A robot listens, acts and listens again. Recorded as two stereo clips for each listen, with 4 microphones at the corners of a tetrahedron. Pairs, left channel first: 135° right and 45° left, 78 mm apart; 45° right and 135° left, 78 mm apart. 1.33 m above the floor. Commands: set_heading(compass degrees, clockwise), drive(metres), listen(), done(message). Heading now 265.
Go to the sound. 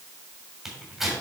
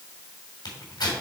set_heading(305)
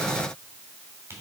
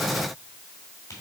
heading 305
listen()
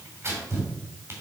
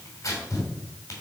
drive(1.0)
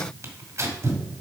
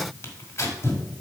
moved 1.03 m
drive(1.0)
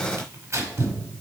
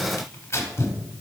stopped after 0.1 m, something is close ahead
done("I am next to the tearing paper.")